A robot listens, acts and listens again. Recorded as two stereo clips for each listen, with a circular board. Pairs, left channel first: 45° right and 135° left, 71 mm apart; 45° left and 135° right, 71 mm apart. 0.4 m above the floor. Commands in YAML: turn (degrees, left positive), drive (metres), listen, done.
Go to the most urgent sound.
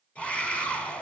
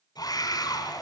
turn: 30
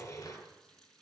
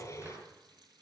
drive: 1.0
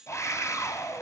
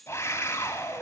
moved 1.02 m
drive: 1.0
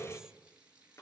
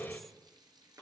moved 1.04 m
turn: -10
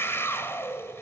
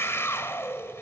drive: 1.0
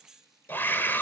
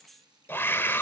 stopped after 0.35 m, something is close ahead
done: "I am next to the scream."